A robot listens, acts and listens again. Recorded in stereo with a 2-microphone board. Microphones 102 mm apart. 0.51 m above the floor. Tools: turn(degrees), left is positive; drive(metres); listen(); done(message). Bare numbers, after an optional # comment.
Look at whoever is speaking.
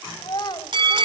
# The child speaking: about 45° left or 135° left.
turn(45)
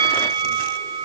listen()
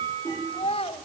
# So it is at 90° left.
turn(90)
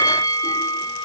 listen()
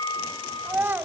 # The child speaking is now 20° right.
turn(-20)
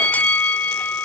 listen()
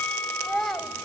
done("Found it: a child speaking, straight ahead, 2 to 4 m away.")